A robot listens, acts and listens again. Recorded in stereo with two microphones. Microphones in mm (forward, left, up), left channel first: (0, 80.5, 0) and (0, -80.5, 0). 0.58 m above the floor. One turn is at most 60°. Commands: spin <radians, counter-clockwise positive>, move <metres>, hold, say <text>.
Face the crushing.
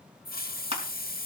spin -0.79
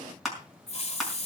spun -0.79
say Facing the crushing.